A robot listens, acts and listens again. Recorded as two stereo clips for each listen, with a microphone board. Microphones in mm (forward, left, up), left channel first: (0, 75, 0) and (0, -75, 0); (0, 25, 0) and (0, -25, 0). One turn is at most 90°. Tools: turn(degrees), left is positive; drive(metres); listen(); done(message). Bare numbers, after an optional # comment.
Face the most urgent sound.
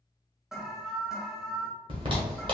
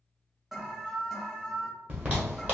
turn(-30)
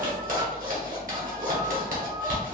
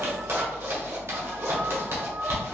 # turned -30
listen()
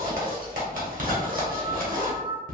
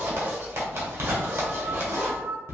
# So it is at 145° right.
turn(-90)
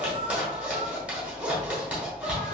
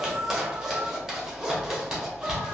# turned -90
# The alarm is now 40° right.
turn(-40)
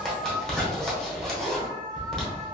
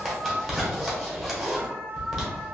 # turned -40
# The alarm is now 30° right.
turn(-30)
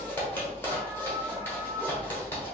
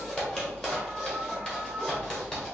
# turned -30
listen()
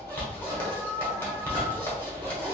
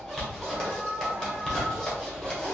# The alarm is now 15° right.
turn(-15)
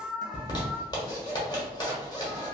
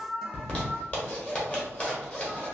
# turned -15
done("Found it: an alarm, straight ahead.")